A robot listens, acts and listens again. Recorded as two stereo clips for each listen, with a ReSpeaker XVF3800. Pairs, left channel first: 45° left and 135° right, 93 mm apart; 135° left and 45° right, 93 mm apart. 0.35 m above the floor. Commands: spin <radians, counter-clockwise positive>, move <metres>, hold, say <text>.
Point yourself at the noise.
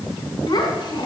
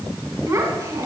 spin 0.17
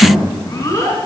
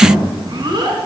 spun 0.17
spin -0.17
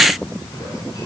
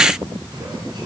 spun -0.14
hold
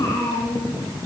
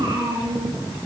say Facing the child speaking, 2 to 4 m away.